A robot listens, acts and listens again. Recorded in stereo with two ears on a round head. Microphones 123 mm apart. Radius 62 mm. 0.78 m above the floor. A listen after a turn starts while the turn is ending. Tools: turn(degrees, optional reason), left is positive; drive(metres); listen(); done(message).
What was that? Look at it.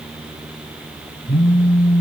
turn(degrees=20, reason="The phone buzzing: about 20° left or 160° left.")
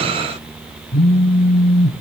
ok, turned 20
turn(degrees=140, reason="So it is at 140° left.")
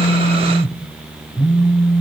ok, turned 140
done("Found it: a phone buzzing, straight ahead.")